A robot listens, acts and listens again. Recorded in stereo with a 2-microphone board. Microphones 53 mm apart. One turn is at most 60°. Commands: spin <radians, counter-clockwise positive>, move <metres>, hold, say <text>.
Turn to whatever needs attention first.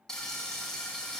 hold
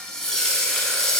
hold
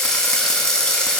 say I can't make out anything urgent, only frying.